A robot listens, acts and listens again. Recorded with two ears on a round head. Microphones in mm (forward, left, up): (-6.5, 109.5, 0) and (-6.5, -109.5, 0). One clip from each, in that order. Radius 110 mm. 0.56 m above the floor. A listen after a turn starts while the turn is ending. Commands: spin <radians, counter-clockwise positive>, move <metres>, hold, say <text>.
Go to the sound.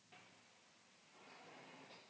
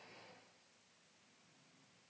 hold
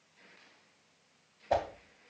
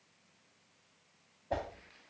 spin 0.79
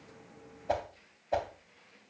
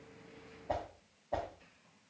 spin 1.57
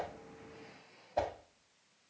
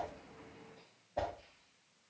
spin 0.52
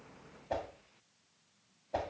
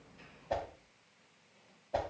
move 1.0
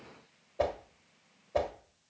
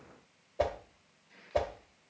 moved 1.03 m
move 1.0
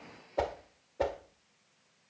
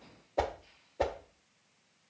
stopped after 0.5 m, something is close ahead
spin -0.26
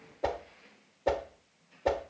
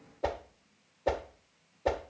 say Arrived at the whoosh, straight ahead.